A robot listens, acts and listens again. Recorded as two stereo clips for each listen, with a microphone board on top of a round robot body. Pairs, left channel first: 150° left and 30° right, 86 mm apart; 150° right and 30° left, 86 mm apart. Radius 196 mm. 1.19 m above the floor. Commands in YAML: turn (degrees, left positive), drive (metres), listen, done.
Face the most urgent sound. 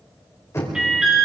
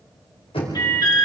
turn: -110
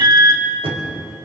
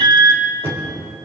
done: "Found it: an alarm, straight ahead, 2 to 4 m away."